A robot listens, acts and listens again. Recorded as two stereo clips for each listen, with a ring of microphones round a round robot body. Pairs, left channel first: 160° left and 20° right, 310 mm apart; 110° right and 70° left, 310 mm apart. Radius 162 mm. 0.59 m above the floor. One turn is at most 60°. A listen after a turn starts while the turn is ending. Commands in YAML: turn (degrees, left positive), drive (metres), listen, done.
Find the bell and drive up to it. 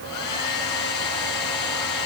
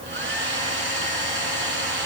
listen: true
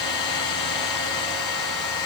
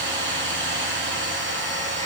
listen: true
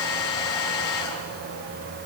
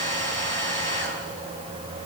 done: "I can't make out a bell to turn to."